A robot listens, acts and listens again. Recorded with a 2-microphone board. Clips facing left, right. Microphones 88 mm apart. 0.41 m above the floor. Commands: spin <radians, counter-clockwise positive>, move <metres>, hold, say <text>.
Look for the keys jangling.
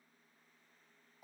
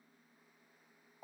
hold
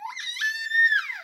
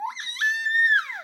hold
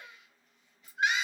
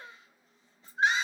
spin 0.52
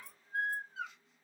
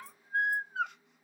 hold
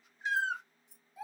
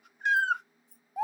spin 1.92
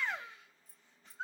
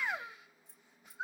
spin -0.44
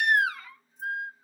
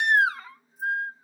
hold
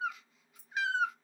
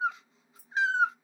say Facing the keys jangling, 1 to 2 m away.